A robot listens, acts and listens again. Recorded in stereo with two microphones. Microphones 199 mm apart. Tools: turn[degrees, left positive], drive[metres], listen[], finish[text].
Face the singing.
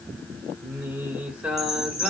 Action: turn[30]
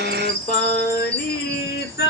Thought: So it is at 120° left.
Action: turn[120]
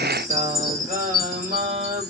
Thought: The singing is now 40° right.
Action: turn[-40]
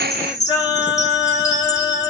Thought: The singing is now 20° left.
Action: turn[20]
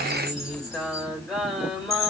Action: finish[Facing the singing, 2 to 4 m away.]